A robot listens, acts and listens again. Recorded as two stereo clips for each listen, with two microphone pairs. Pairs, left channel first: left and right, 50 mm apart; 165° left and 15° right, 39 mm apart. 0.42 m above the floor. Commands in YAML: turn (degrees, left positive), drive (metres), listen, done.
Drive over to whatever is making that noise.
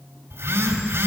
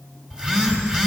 turn: -90
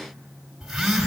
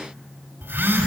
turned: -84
drive: 1.0
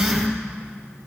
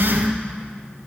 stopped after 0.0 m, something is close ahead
done: "Blocked. The phone buzzing is further on, straight ahead."